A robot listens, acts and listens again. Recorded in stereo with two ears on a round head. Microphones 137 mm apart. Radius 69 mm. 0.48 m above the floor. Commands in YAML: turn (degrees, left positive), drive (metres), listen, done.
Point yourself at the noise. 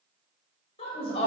turn: 40
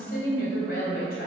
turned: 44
turn: 115
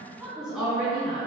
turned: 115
done: "Facing the woman speaking, over 4 m away."